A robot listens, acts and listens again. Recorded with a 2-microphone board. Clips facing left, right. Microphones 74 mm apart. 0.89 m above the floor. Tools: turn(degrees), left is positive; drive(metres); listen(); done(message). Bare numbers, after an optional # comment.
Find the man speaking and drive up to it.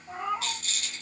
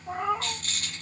listen()
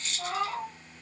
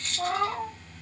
listen()
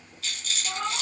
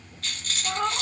done("I can't make out a man speaking, only a rattle and a cat meowing.")